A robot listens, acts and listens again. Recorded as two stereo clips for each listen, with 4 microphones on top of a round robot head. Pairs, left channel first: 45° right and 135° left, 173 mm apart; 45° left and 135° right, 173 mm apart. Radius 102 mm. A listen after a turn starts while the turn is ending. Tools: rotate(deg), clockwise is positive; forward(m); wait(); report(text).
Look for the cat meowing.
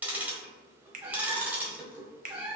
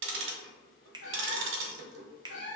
rotate(-70)
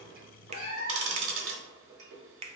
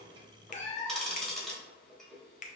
rotate(10)
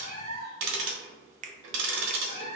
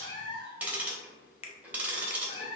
report("Facing the cat meowing, 1 to 2 m away.")